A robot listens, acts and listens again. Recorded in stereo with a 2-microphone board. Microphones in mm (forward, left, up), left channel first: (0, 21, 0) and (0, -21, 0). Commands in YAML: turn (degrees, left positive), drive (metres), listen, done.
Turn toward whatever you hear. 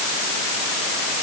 listen: true
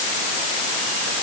listen: true
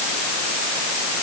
done: "I can't make out anything to turn to."